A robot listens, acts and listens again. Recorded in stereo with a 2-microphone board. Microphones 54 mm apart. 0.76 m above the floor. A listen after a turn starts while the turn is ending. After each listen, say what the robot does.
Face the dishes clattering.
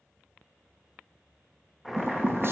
Turn 45° right.
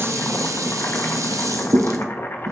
Turn 90° right.
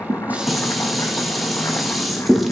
Found it: dishes clattering, straight ahead, under 1 m away.